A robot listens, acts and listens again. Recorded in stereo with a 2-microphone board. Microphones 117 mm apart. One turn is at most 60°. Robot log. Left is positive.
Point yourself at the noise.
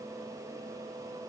cmd idle
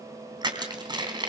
note: The crushing: about 40° right or 140° right.
cmd yaw -40
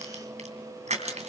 note: So it is at 100° right.
cmd yaw -60
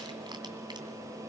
note: Nothing new. It was at 40° right.
cmd yaw -40
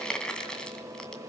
note: The crushing is now 10° left.
cmd yaw +10
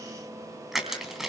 end: Found it: crushing, straight ahead.